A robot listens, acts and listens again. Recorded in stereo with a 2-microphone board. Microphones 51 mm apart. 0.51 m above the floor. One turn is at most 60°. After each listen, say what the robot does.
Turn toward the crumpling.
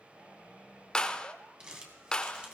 Turn 20° right.
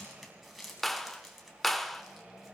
Facing the crumpling, 2 to 4 m away.